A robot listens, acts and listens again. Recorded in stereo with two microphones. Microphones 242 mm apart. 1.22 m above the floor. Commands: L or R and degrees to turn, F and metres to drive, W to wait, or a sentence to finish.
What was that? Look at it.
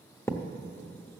L30
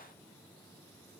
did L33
W
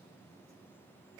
I heard a thud, but can't make it out now. It was about 20° right or 135° left.